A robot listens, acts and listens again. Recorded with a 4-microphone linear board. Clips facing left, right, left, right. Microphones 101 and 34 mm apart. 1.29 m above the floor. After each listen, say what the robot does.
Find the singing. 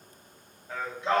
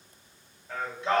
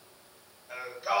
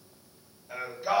Turn 30° left.
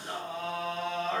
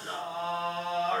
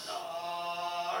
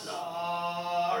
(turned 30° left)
Turn 40° right.
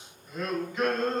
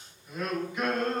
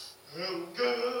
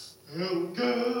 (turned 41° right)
Turn 15° right.
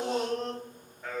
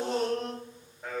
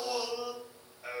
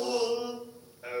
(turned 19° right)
Found it: singing, straight ahead, 2 to 4 m away.